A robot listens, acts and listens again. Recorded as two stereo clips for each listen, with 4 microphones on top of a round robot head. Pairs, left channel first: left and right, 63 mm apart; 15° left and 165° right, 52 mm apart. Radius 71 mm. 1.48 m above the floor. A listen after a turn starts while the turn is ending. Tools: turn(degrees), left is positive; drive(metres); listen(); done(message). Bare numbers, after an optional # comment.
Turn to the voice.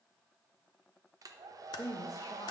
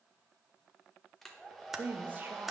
# The woman speaking: 140° left.
turn(140)
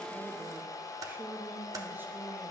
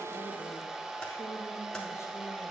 # The woman speaking is now 35° right.
turn(-35)
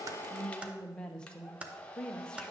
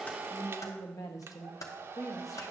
# The woman speaking is now 15° left.
turn(15)
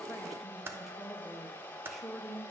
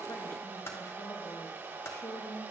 done("Facing the woman speaking.")